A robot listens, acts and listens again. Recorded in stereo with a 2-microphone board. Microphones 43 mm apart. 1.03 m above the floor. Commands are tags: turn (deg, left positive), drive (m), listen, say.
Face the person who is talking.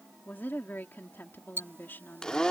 <turn deg="50"/>
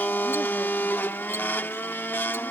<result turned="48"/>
<listen/>
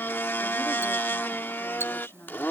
<turn deg="80"/>
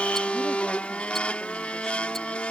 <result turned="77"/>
<listen/>
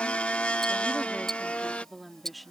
<say>Facing the woman speaking.</say>